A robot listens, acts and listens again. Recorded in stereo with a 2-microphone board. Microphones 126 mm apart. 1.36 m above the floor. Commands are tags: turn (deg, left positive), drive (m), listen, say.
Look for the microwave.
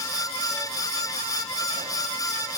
<listen/>
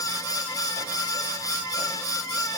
<listen/>
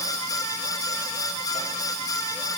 <say>I can't make out a microwave to turn to.</say>